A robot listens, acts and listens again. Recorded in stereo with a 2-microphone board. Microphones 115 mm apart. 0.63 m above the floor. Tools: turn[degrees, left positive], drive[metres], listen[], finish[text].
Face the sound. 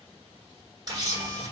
Thought: The camera shutter: about 35° right or 145° right.
Action: turn[-35]
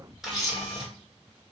Action: finish[Facing the camera shutter, 1 to 2 m away.]